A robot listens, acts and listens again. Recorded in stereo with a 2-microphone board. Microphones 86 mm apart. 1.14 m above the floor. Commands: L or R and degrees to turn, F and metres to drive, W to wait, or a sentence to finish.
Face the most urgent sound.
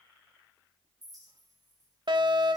R65
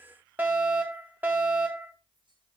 R25
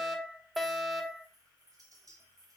Facing the fire alarm.